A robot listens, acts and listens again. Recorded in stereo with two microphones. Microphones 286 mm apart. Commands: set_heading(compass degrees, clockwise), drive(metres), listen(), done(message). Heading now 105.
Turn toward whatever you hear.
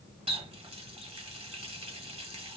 set_heading(125)
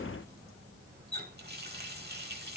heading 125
set_heading(265)
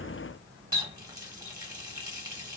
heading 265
set_heading(280)
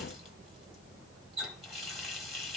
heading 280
done("Found it: a running tap, straight ahead, 1 to 2 m away.")